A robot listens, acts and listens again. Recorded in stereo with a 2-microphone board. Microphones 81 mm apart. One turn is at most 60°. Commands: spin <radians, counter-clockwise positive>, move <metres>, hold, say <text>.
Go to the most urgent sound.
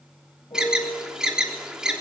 spin -0.52
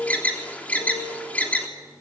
spin 0.35
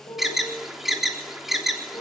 move 1.0
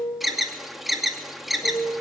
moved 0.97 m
move 1.0
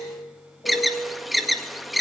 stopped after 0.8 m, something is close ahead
say I am next to the alarm.